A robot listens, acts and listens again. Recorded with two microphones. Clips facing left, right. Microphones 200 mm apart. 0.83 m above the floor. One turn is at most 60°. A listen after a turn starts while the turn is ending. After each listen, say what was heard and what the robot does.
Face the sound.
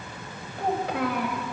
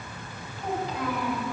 Turn 60° left.
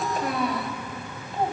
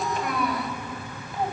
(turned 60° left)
So it is at 25° left. Turn 25° left.
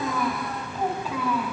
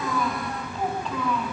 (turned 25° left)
The child speaking is now 10° left. Turn 10° left.
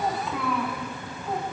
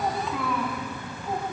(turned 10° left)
Facing the child speaking, over 4 m away.